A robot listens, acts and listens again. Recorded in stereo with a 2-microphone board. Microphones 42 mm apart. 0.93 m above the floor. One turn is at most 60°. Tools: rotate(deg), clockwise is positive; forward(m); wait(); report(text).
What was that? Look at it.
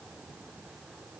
wait()
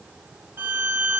rotate(60)
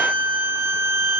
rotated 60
rotate(55)
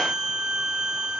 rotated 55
rotate(10)
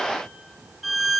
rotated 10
report("Facing the violin, 1 to 2 m away.")